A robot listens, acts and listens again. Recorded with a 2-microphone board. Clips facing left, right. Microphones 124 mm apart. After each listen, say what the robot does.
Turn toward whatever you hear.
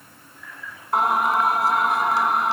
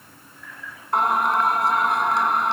Turn 30° left.
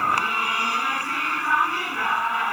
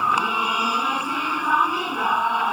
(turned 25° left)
Turn 25° right.
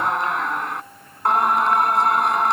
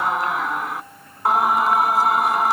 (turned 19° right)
Facing the singing.